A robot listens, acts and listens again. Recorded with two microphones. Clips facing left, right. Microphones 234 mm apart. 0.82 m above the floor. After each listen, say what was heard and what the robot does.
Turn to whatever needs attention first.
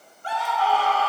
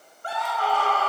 The scream: about 55° right or 125° right. Turn 55° right.
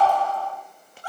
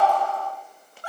So it is at 70° right. Turn 70° right.
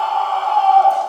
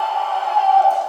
The scream is now 20° right. Turn 20° right.
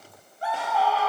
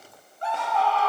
Facing the scream, 2 to 4 m away.